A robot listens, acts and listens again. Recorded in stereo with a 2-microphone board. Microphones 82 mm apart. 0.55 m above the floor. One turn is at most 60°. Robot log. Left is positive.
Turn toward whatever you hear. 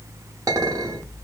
note: The clink: about 45° right or 135° right.
cmd yaw -45
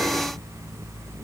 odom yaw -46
cmd idle
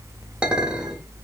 note: So it is at 15° right.
cmd yaw -15
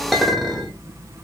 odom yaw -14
end: Found it: a clink, straight ahead, under 1 m away.